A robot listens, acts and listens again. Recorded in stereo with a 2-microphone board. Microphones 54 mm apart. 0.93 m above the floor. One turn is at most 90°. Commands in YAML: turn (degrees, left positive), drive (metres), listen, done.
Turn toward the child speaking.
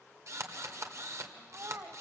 turn: -60
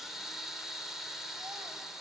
listen: true
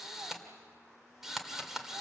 listen: true
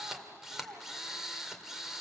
turn: -65
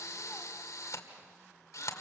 listen: true
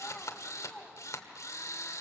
turn: 15
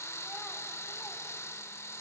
listen: true
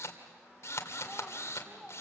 done: "Found it: a child speaking, straight ahead, over 4 m away."